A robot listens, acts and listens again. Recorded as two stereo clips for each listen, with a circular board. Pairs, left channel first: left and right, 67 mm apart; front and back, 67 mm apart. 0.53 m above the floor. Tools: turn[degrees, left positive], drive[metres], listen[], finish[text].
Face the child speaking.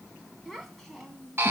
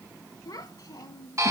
Action: finish[Found it: a child speaking, straight ahead.]